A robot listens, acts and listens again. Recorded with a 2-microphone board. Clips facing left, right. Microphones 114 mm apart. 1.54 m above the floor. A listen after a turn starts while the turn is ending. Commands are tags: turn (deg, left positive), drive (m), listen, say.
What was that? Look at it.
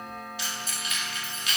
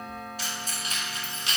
<turn deg="-30"/>
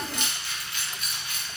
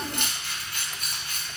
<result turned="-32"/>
<turn deg="-40"/>
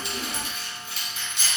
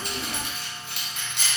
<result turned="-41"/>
<turn deg="-120"/>
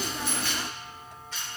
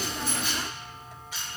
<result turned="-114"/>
<turn deg="-10"/>
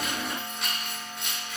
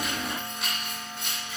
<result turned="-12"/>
<say>Found it: keys jangling, straight ahead, 2 to 4 m away.</say>